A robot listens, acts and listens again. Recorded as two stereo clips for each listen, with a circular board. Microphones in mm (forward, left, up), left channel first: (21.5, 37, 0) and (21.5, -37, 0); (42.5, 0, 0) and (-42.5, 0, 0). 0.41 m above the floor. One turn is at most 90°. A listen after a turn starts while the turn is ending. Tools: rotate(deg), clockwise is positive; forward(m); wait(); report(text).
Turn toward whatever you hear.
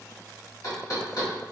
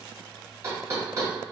rotate(-90)
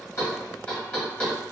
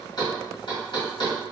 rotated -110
rotate(-20)
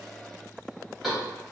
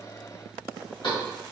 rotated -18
report("Facing the knocking.")